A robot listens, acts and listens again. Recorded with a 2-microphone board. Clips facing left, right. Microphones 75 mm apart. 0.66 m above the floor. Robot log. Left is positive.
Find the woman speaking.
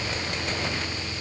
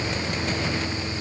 cmd idle
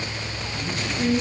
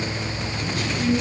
note: The woman speaking: about 35° left or 145° left.
cmd yaw +35
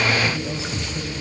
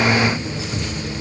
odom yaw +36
note: So it is at 105° left.
cmd yaw +105
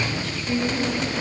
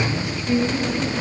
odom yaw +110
note: The woman speaking is now 20° right.
cmd yaw -20
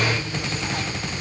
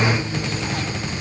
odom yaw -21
cmd idle
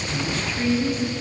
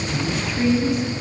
end: Facing the woman speaking.